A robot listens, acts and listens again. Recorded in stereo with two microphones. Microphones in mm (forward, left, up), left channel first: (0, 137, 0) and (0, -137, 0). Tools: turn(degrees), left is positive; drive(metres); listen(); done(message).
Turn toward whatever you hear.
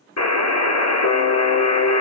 turn(degrees=90)
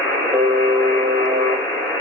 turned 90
turn(degrees=10)
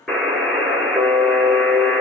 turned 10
done("Facing the buzzer.")